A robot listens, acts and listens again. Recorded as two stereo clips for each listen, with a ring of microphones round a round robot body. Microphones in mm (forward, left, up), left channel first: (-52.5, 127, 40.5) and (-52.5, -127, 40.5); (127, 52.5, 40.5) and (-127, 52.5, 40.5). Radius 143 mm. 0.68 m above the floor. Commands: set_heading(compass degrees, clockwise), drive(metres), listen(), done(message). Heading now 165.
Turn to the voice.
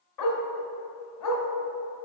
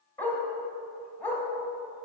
listen()
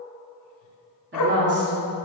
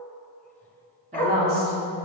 set_heading(295)
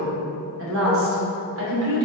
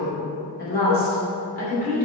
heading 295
set_heading(355)
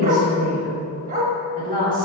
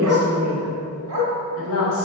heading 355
set_heading(25)
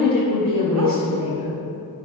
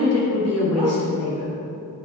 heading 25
set_heading(5)
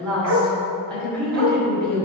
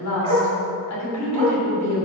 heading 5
done("Found it: a woman speaking, straight ahead.")